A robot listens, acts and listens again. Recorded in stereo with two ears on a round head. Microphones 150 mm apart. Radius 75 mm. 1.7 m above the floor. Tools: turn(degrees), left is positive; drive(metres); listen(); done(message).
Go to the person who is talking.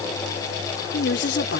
turn(degrees=75)
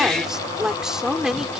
drive(metres=1.0)
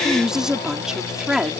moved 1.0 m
drive(metres=1.0)
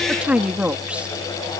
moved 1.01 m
drive(metres=1.0)
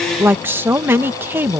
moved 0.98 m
turn(degrees=-15)
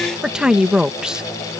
drive(metres=1.0)
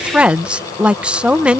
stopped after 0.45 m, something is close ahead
done("Arrived at the woman speaking, straight ahead.")